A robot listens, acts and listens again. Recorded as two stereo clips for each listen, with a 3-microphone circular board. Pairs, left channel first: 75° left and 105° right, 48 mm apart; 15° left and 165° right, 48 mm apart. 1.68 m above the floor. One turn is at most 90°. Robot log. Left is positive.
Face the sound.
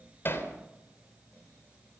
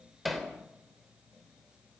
note: The hammering: 105° left.
cmd yaw +90
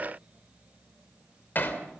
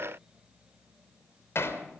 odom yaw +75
note: The hammering is now 30° left.
cmd yaw +30
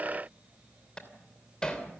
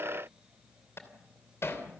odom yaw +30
end: Facing the hammering.